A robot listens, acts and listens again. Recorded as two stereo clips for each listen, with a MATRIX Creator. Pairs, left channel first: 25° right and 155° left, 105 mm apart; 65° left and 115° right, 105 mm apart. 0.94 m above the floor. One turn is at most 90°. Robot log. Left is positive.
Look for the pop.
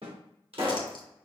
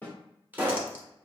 note: The pop: 175° left.
cmd yaw +90
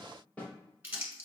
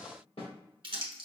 note: Nothing new. It was at 85° left.
cmd yaw +85
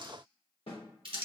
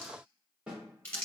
end: Facing where the pop came from. I can't hear it now.